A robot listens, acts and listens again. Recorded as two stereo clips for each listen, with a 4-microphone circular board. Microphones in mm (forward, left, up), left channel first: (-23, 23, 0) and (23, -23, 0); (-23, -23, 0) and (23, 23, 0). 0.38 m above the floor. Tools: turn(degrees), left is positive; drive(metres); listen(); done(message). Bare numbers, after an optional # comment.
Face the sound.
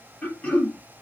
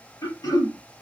# The throat clearing: 160° right.
turn(-160)
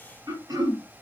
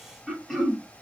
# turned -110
# The throat clearing is now 50° right.
turn(-50)
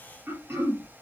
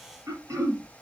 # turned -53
done("Found it: throat clearing, straight ahead.")